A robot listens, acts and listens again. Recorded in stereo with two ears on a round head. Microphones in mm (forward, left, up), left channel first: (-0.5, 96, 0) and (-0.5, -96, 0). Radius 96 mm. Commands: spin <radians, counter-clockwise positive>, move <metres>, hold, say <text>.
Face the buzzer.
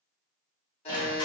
spin 0.52
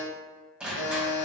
spin 2.09
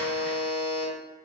say Facing the buzzer.